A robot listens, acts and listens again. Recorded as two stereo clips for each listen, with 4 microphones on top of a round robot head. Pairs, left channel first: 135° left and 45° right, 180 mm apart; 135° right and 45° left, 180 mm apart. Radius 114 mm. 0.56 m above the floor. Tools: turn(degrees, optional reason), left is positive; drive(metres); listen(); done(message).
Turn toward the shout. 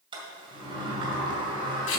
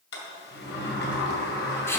listen()
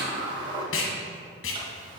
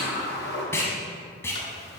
listen()
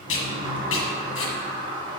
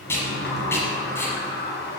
done("I can't make out a shout to turn to.")